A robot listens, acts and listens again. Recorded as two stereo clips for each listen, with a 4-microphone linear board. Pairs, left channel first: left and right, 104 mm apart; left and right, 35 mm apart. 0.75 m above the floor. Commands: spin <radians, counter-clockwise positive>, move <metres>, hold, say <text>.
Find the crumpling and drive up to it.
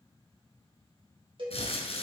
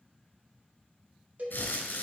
spin 1.57
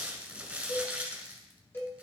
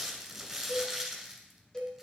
spin -0.17
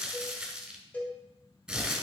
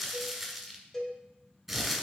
move 1.0
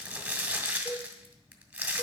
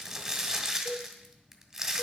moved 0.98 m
spin -0.26
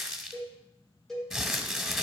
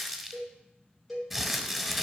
move 1.0
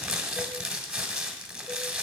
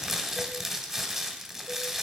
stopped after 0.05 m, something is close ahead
say Arrived at the crumpling, straight ahead.